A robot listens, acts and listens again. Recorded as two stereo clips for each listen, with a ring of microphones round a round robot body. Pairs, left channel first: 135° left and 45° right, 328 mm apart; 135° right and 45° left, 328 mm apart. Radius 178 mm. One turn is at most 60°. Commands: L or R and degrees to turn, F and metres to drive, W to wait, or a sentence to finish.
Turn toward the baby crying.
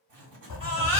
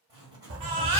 L25
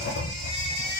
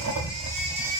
W
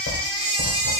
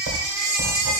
Found it: a baby crying, straight ahead.